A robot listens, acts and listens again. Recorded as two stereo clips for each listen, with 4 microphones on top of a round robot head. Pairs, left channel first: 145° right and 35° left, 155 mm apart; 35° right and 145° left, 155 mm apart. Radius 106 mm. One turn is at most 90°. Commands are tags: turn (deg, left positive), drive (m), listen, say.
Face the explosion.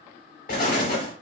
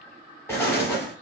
<turn deg="-90"/>
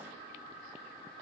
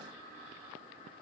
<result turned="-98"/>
<turn deg="-10"/>
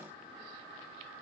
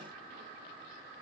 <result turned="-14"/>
<say>I heard an explosion from this way, but can't make it out now.</say>